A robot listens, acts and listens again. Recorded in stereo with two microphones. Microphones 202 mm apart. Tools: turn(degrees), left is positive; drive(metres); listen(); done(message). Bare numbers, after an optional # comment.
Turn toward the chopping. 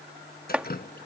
turn(-30)
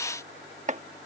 # So it is at 140° right.
turn(-140)
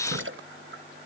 listen()
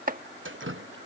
# The chopping is now 45° right.
turn(-45)
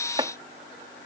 # The chopping is now 25° right.
turn(-25)
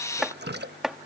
done("Facing the chopping.")